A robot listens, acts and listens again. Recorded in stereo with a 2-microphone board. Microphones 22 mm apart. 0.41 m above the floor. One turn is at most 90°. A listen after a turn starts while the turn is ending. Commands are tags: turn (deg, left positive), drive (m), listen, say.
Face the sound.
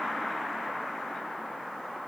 <listen/>
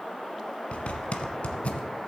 <turn deg="70"/>
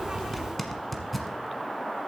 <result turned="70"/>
<say>Found it: a zipper, straight ahead.</say>